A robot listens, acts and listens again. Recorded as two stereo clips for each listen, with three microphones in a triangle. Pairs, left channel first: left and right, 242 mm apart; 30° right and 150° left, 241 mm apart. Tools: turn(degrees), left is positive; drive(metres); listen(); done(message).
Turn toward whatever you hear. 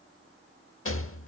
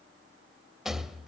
turn(degrees=60)
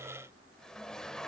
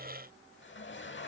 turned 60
listen()
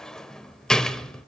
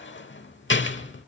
done("Facing the rattle.")